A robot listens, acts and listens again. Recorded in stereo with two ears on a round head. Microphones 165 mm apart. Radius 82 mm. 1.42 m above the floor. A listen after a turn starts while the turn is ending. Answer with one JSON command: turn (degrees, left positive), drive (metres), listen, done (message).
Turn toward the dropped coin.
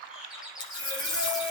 {"turn": 30}
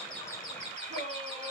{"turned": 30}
{"listen": true}
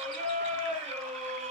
{"done": "I heard a dropped coin, but can't make it out now. It was about straight ahead or 120° left."}